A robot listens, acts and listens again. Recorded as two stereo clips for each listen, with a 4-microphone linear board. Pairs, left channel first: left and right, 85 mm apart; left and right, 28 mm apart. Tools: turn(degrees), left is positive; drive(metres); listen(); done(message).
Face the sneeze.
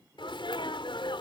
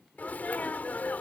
turn(degrees=90)
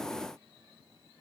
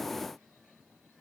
done("I heard a sneeze from this way, but can't make it out now.")